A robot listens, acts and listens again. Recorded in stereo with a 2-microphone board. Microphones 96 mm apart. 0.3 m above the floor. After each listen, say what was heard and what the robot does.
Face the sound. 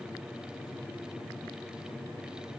Keep listening.
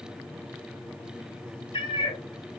The cat meowing: about 65° left or 115° left. Turn 65° left.
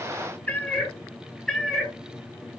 Found it: a cat meowing, straight ahead, 1 to 2 m away.